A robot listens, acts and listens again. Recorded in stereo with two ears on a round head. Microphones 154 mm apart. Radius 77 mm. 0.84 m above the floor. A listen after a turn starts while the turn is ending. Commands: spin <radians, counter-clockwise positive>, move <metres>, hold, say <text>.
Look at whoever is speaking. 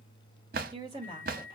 spin -0.44
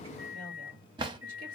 hold
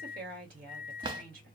spin -2.18
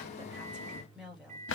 say Facing the woman speaking.